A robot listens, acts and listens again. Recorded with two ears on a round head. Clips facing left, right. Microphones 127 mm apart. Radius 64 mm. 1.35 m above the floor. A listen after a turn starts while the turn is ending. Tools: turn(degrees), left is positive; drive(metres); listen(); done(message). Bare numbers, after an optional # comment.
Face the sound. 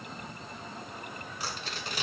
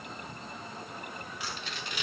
# The tearing paper: about 35° left or 145° left.
turn(35)
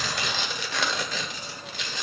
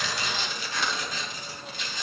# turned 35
# So it is at 105° left.
turn(105)
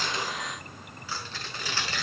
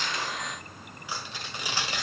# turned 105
# The tearing paper is now 15° right.
turn(-15)
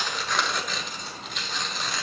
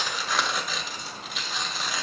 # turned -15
done("Found it: tearing paper, straight ahead, 1 to 2 m away.")